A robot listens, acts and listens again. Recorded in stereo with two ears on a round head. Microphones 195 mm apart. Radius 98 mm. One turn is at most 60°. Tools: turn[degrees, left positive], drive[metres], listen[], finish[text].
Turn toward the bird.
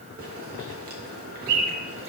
Thought: The bird: about 70° right or 110° right.
Action: turn[-60]
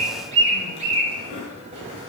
Thought: So it is at 30° right.
Action: turn[-30]
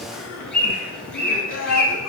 Action: finish[Facing the bird.]